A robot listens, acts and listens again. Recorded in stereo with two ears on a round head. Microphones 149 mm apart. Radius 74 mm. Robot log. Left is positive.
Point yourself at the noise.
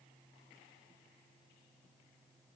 cmd idle
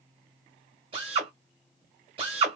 note: The drill: about 35° right or 145° right.
cmd yaw -35
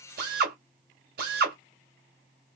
note: So it is at 110° right.
cmd yaw -110
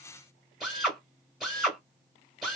end: Found it: a drill, straight ahead.